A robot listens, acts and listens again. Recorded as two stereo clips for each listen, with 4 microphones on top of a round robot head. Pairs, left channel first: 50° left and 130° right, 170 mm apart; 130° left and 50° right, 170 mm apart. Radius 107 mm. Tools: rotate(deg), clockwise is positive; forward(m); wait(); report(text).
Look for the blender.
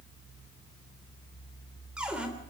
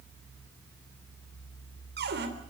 wait()
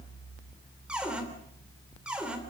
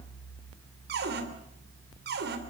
wait()
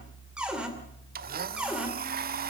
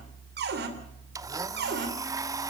rotate(115)
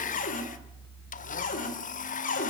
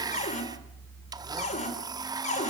rotate(-15)
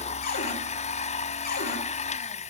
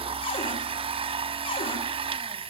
report("Facing the blender.")